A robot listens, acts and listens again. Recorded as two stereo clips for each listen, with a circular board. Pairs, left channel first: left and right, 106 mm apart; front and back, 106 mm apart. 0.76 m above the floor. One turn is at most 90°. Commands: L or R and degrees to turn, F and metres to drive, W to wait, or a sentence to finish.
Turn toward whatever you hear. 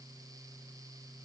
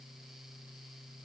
W
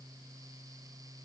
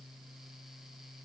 W
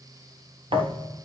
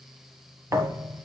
R90
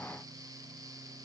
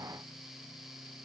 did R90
R30
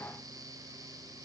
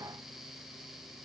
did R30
Facing where the thud came from. I can't hear it now.